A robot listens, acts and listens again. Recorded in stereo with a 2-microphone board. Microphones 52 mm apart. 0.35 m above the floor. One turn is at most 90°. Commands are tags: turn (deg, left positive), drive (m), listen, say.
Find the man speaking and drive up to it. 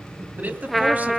<turn deg="-30"/>
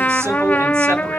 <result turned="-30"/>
<listen/>
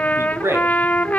<turn deg="-90"/>
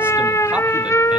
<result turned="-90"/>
<turn deg="-25"/>
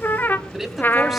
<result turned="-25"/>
<drive m="1.0"/>
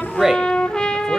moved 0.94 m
<turn deg="-10"/>
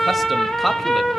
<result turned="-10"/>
<drive m="1.0"/>
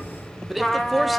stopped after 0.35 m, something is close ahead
<say>Arrived at the man speaking, straight ahead.</say>